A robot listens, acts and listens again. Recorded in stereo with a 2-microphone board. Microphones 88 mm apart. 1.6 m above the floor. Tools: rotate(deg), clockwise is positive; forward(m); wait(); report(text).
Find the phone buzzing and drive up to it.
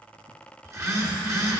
rotate(35)
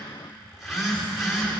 forward(1.0)
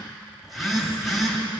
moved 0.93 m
forward(1.0)
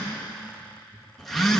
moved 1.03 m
forward(1.0)
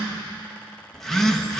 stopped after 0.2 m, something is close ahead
report("Arrived at the phone buzzing, straight ahead.")